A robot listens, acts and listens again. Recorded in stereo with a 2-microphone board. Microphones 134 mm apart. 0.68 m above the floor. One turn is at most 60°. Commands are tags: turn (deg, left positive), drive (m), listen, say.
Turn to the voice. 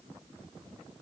<listen/>
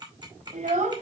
<turn deg="-60"/>
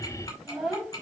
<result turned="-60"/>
<say>Facing the child speaking, 2 to 4 m away.</say>